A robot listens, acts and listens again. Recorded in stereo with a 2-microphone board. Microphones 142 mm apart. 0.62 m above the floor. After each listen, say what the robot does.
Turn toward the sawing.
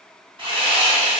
Turn 40° right.
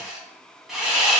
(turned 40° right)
Found it: sawing, straight ahead, 1 to 2 m away.